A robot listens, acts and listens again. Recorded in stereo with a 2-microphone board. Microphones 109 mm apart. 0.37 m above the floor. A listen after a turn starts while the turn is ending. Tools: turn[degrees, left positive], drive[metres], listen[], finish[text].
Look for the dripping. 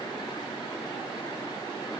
Action: listen[]
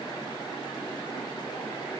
Action: listen[]
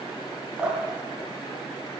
Action: turn[-30]
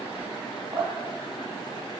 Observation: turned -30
Thought: So it is at 140° right.
Action: turn[-140]
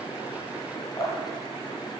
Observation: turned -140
Thought: The dripping is now 35° left.
Action: turn[35]
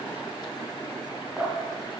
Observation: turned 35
Thought: The dripping is now 10° right.
Action: turn[-10]
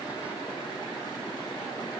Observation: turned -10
Action: listen[]
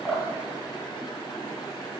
Action: finish[Found it: dripping, straight ahead.]